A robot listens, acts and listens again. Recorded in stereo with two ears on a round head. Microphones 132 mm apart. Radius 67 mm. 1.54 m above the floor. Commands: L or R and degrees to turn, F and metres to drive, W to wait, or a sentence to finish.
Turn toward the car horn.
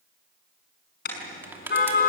L70
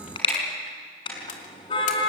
L35
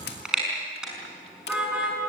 Facing the car horn, over 4 m away.